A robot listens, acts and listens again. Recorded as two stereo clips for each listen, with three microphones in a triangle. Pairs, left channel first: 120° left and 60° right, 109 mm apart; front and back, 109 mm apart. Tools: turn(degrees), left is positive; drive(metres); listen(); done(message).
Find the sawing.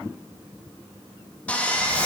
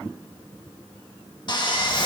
turn(degrees=45)
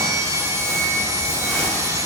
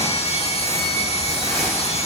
done("Found it: sawing, straight ahead, 1 to 2 m away.")